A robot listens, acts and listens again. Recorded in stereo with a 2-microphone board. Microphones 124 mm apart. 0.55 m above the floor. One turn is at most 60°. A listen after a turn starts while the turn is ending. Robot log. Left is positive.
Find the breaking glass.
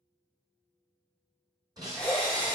note: The breaking glass: about 30° right or 150° right.
cmd yaw -30
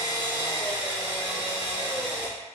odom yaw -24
cmd idle
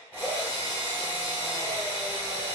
end: I heard breaking glass, but can't make it out now. It was about 10° right or 125° right.